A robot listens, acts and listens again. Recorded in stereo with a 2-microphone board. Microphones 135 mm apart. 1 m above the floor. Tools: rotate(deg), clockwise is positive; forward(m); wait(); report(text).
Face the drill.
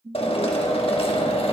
rotate(-45)
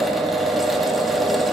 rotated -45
report("Found it: a drill, straight ahead.")